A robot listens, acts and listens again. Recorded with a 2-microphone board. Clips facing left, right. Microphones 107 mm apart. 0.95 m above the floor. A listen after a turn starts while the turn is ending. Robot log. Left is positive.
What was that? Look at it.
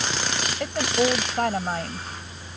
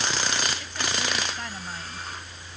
note: The woman speaking: about 60° left or 120° left.
cmd yaw +60
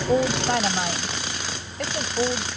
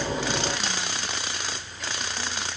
note: So it is at 60° left.
cmd yaw +60
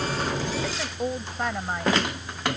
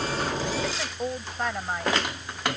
end: Facing the woman speaking.